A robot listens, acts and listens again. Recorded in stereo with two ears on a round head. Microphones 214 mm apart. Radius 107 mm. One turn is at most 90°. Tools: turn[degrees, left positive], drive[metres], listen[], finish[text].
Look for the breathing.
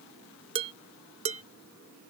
Action: listen[]
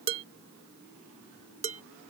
Action: listen[]
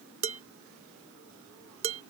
Action: finish[I can't make out breathing to turn to.]